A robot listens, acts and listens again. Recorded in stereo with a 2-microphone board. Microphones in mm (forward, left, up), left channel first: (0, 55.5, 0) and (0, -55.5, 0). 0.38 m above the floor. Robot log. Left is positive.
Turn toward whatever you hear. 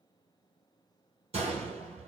note: The gunshot: about 70° right or 110° right.
cmd yaw -70
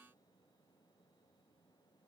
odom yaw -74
cmd idle
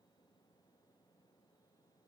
end: I heard a gunshot, but can't make it out now. It was about 5° left or 35° right.